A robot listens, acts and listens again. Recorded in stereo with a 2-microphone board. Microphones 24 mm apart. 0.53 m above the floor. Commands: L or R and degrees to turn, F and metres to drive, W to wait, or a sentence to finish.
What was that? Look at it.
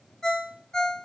L25
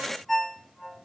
Found it: a ringtone, straight ahead, under 1 m away.